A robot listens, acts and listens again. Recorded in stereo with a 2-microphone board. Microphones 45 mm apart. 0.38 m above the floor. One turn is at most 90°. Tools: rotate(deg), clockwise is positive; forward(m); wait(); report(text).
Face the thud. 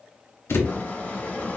rotate(-70)
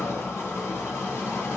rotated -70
wait()
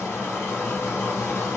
report("I heard a thud, but can't make it out now. It was about straight ahead or 40° left.")